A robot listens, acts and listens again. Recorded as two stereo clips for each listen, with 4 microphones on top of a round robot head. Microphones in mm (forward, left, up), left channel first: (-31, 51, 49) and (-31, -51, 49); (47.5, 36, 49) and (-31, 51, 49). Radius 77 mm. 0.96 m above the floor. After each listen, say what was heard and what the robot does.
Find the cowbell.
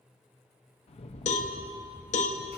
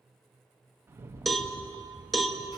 The cowbell: 80° left. Turn 80° left.
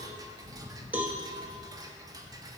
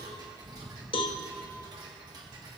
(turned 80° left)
The cowbell is now 15° right. Turn 15° right.
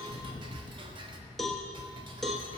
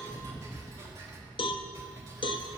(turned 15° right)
Facing the cowbell, under 1 m away.